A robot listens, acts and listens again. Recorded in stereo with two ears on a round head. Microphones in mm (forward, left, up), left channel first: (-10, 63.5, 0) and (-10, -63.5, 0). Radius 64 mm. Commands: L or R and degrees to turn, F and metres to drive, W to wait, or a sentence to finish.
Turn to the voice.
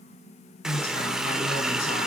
L50
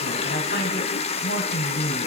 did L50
L75
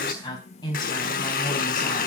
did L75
L25
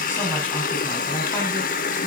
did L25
W
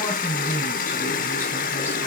L15
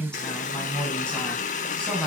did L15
Facing the woman speaking.